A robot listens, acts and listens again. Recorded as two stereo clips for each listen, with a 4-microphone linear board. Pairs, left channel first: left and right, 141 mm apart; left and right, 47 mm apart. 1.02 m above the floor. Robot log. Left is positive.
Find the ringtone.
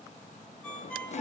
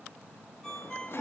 cmd yaw +30
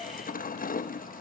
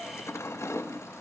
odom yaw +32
cmd idle
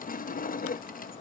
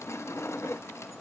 cmd idle
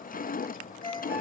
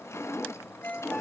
note: So it is at 145° left.
cmd yaw +145
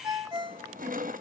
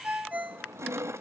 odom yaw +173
note: The ringtone is now 30° right.
cmd yaw -30
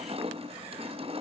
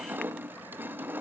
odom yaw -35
cmd idle
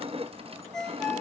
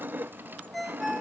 end: Found it: a ringtone, straight ahead, 2 to 4 m away.